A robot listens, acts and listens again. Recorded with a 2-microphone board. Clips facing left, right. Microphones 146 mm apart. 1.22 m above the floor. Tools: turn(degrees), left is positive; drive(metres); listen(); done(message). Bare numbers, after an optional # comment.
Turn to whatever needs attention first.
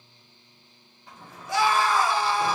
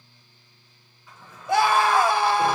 # The scream: about 60° right or 120° right.
turn(-60)
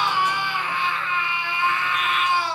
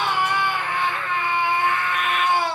# So it is at 55° right.
turn(-55)
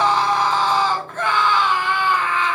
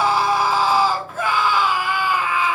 # The scream is now 10° right.
turn(-10)
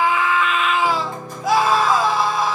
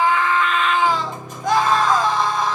done("Facing the scream.")